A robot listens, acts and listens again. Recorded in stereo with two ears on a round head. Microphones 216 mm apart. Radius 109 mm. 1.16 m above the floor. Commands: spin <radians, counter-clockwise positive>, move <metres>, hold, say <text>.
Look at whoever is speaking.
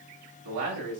spin -1.57
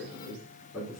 say Facing the man speaking.